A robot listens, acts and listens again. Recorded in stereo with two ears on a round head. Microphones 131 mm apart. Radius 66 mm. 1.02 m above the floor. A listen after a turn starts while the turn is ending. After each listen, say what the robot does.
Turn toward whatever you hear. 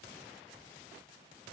Keep listening.
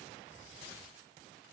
Keep listening.
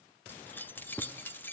Turn 30° left.
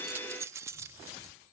Turn 20° right.
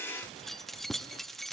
Facing the keys jangling, under 1 m away.